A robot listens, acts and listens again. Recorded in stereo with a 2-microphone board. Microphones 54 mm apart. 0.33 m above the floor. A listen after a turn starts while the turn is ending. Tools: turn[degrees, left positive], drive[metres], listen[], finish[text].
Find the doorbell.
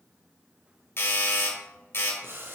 Thought: The doorbell: about 50° left or 130° left.
Action: turn[50]
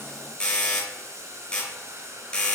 Thought: So it is at 20° left.
Action: turn[20]
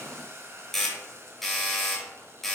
Action: finish[Found it: a doorbell, straight ahead, 2 to 4 m away.]